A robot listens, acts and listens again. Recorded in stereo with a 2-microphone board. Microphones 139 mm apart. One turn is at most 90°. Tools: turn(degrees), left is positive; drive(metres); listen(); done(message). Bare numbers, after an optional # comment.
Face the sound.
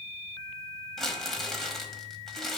turn(30)
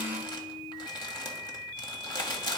# So it is at 145° left.
turn(90)
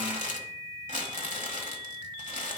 # The crumpling is now 100° left.
turn(90)
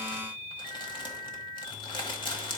# The crumpling is now 40° left.
turn(40)
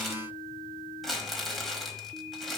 done("Found it: crumpling, straight ahead, 1 to 2 m away.")